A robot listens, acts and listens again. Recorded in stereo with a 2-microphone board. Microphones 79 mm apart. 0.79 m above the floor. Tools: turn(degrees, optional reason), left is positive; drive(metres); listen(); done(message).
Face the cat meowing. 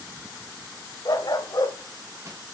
listen()
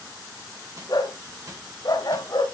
listen()
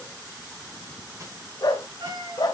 turn(degrees=-90)
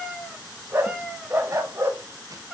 done("Found it: a cat meowing, straight ahead.")